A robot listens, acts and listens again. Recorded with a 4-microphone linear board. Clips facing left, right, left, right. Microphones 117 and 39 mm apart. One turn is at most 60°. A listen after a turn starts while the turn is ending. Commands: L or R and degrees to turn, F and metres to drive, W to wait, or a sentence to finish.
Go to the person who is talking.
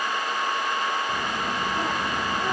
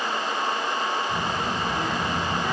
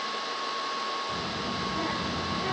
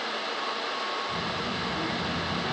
L55
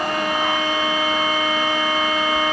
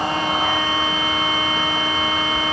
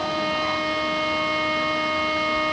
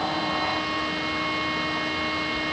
F1.0
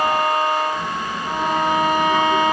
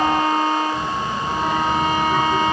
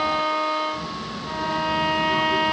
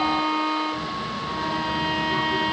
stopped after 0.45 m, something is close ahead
L15
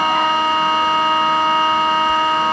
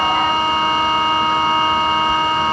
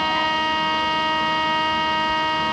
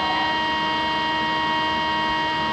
Something is in my way. I am facing the child speaking but have not reached it.